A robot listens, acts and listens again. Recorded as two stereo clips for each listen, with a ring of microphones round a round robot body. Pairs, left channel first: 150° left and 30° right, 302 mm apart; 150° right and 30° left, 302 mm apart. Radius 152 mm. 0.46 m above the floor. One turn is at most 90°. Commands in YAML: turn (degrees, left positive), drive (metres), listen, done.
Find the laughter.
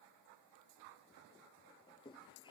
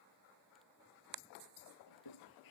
turn: -90
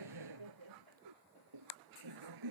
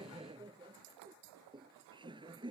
turn: -45
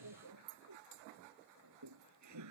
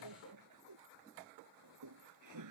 done: "Found it: laughter, straight ahead."